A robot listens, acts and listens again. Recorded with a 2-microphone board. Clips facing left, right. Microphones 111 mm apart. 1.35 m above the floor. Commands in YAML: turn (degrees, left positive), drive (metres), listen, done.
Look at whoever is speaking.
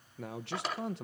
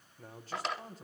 turn: 90
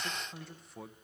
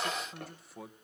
done: "Facing the man speaking, 1 to 2 m away."